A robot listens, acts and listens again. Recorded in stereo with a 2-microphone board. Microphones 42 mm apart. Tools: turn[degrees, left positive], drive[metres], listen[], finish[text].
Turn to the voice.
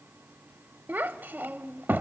Thought: The child speaking: about 50° right or 130° right.
Action: turn[-50]
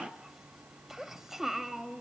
Thought: So it is at 10° right.
Action: turn[-10]
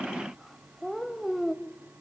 Action: finish[Found it: a child speaking, straight ahead.]